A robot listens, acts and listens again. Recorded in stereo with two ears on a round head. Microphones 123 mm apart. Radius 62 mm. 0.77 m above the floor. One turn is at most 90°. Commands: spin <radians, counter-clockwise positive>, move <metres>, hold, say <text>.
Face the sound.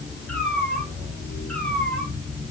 spin 0.52
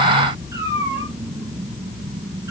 spin -0.44
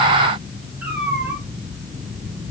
spin -0.17
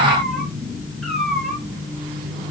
say Found it: a cat meowing, straight ahead.